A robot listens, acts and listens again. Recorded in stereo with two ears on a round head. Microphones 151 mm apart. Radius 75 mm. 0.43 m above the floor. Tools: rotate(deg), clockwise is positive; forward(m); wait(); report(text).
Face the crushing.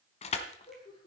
rotate(-40)
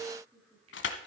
rotate(-100)
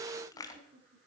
rotate(-20)
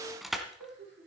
report("Found it: crushing, straight ahead, 1 to 2 m away.")